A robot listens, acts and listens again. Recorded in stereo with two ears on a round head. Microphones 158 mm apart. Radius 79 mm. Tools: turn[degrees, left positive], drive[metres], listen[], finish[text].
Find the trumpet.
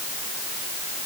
Action: listen[]
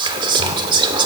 Action: listen[]
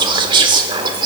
Action: finish[I can't make out a trumpet to turn to.]